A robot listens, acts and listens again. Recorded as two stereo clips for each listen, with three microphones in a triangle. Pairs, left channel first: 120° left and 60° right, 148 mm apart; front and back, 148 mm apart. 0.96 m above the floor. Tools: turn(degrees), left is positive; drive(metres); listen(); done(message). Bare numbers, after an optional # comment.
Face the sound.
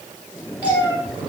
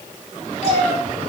# The cat meowing: 15° left.
turn(15)
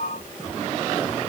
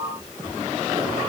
listen()
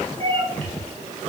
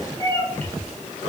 # The cat meowing is now 65° right.
turn(-65)
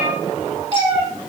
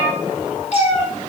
# The cat meowing is now 30° right.
turn(-30)
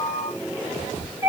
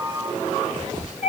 done("Found it: a cat meowing, straight ahead.")